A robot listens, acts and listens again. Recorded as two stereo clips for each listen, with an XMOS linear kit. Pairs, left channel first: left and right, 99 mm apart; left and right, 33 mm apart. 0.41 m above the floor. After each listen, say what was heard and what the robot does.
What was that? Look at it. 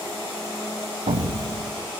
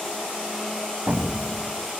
Turn 90° right.
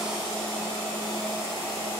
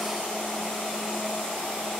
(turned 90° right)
I heard an explosion from this way, but can't make it out now.